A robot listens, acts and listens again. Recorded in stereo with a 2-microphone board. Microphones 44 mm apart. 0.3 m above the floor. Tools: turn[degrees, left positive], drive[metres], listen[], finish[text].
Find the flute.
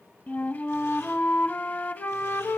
Thought: The flute: about 45° left or 135° left.
Action: turn[45]
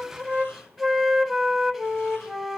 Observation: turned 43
Action: finish[Found it: a flute, straight ahead, under 1 m away.]